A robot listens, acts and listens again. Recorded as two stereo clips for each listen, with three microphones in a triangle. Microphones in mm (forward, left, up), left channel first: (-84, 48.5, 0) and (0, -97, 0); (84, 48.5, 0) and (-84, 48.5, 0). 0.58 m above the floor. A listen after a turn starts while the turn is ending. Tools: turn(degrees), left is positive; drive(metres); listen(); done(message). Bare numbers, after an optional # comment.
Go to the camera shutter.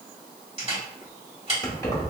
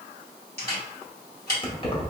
# The camera shutter: 10° right.
turn(-10)
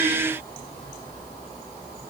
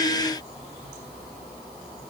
listen()
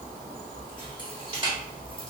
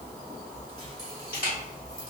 drive(1.0)
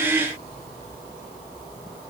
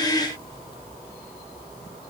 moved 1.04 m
listen()
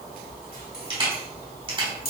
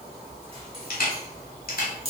drive(1.0)
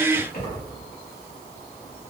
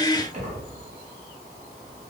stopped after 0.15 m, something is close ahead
listen()
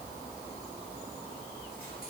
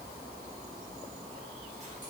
listen()
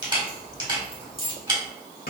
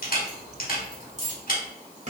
done("Arrived at the camera shutter, straight ahead.")